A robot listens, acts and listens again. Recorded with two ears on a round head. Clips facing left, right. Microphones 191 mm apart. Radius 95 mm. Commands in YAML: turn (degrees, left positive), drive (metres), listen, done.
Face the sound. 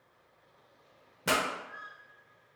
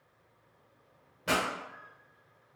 turn: 60
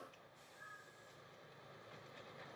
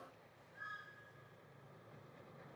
listen: true
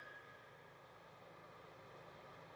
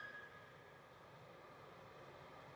done: "I heard a pop, but can't make it out now. It was about straight ahead or 60° left."